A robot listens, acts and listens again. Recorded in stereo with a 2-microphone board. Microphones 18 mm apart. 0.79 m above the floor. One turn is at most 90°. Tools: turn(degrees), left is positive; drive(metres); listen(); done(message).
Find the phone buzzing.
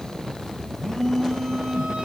turn(degrees=30)
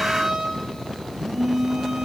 done("Facing the phone buzzing, 1 to 2 m away.")